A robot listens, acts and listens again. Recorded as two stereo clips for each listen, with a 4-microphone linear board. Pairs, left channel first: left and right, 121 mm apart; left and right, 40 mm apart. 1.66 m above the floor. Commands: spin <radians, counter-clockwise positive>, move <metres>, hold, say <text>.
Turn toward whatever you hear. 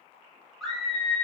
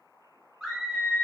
spin 0.52
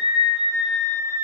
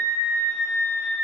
spin 2.62
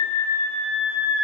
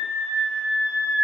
spin -0.17
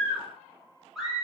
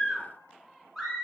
say Facing the scream, under 1 m away.